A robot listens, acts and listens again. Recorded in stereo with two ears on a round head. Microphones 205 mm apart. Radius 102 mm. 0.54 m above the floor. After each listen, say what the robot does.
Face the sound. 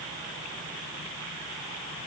Keep listening.
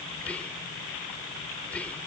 Turn 30° left.
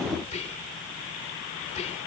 Turn 140° left.
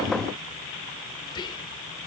Turn 25° left.
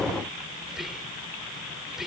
Facing the whispering.